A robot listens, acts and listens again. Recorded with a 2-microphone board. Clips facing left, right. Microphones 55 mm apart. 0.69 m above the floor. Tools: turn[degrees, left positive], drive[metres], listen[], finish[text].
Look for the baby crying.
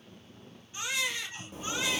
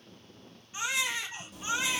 Thought: The baby crying: about 25° right or 155° right.
Action: turn[-25]
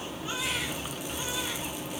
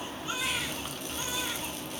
Action: listen[]
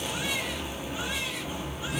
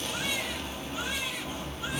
Action: listen[]
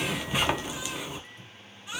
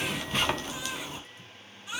Action: finish[I heard a baby crying, but can't make it out now. It was about straight ahead or 130° right.]